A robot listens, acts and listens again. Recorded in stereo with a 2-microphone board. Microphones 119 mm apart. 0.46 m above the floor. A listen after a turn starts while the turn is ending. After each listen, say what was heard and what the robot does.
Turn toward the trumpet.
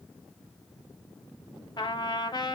The trumpet: about 40° left or 140° left. Turn 40° left.
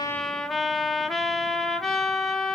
Found it: a trumpet, straight ahead.